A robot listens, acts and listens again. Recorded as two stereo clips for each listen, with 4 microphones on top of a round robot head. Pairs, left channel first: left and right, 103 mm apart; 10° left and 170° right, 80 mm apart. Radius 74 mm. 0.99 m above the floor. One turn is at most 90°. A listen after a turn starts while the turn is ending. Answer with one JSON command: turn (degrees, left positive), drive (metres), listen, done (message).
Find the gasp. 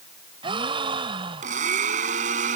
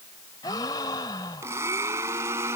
{"turn": -50}
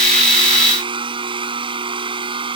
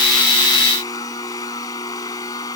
{"done": "Facing where the gasp came from. I can't hear it now."}